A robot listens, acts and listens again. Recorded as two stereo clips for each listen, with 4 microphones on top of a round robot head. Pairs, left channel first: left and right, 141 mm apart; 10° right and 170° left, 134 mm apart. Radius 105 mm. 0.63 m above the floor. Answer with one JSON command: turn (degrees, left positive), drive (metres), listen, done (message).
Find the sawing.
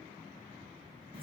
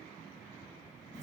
{"listen": true}
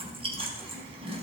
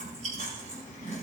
{"listen": true}
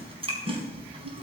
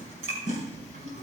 {"done": "I can't make out sawing to turn to."}